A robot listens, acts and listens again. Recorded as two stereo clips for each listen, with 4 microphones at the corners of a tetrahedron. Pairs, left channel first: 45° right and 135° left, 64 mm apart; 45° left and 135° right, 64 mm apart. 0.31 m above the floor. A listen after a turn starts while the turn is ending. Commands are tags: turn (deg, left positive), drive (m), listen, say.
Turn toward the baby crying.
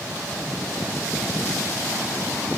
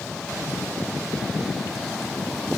<listen/>
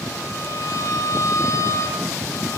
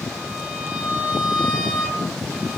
<listen/>
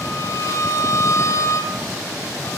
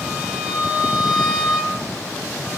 <say>I can't make out a baby crying, only a violin.</say>